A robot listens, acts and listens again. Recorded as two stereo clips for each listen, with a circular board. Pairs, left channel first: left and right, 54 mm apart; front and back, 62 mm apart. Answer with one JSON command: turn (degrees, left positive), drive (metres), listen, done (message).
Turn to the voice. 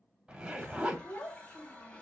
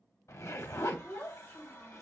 {"turn": 60}
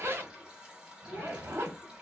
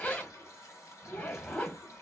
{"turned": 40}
{"turn": 20}
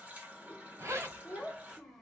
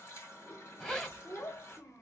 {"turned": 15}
{"done": "Facing the child speaking."}